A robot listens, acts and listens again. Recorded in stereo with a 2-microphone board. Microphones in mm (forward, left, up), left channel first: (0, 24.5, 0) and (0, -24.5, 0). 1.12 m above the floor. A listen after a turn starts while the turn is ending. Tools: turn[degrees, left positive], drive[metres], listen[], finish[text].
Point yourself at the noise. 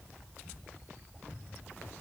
Action: listen[]
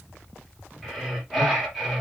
Action: turn[30]
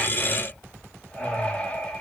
Thought: So it is at 155° left.
Action: turn[155]
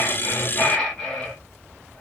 Thought: The breathing is now 20° left.
Action: turn[20]
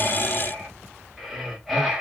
Action: finish[Found it: breathing, straight ahead, 1 to 2 m away.]